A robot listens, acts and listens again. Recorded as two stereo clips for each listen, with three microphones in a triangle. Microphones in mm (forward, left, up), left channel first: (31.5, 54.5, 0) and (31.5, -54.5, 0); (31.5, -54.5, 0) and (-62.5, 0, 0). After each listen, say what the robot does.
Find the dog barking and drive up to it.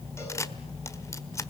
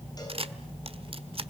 Keep listening.
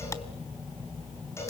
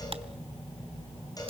Keep listening.
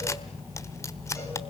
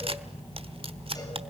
I can't make out a dog barking, only a camera shutter.